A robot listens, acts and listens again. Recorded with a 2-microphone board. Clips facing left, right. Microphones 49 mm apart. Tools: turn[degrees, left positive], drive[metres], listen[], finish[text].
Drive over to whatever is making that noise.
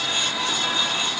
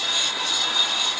Action: listen[]
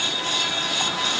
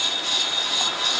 Action: listen[]
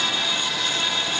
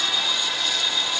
Action: finish[I can't make out anything.]